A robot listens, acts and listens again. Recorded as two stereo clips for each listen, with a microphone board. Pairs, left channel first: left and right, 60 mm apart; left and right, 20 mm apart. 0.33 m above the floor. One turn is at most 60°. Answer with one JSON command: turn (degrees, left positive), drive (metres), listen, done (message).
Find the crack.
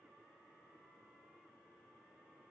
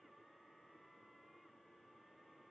{"listen": true}
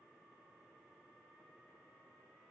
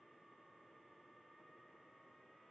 {"listen": true}
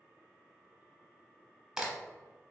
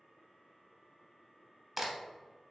{"turn": -30}
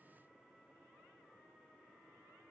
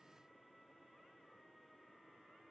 {"listen": true}
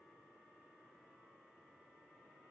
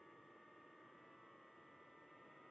{"done": "I heard a crack, but can't make it out now. It was about 15° left or 135° right."}